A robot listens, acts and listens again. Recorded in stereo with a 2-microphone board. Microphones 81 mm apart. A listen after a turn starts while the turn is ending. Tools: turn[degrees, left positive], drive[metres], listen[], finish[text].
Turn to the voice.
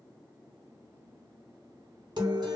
Action: listen[]
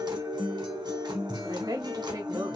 Thought: The woman speaking: about 50° right or 130° right.
Action: turn[-50]
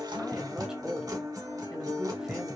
Thought: So it is at 10° right.
Action: turn[-10]
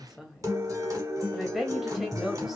Action: finish[Facing the woman speaking.]